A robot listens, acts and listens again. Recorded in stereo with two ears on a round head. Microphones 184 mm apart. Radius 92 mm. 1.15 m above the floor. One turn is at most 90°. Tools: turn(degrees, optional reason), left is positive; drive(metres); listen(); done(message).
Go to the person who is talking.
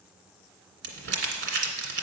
listen()
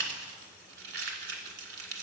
listen()
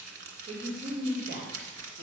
turn(degrees=-45, reason="The woman speaking: about 45° right or 135° right.")
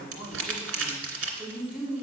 drive(metres=1.0)
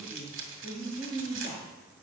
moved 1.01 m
turn(degrees=-10, reason="The woman speaking is now 10° right.")
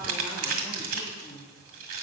drive(metres=1.0)
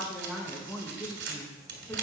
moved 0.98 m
drive(metres=1.0)
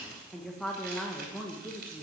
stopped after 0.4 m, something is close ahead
done("I am next to the woman speaking.")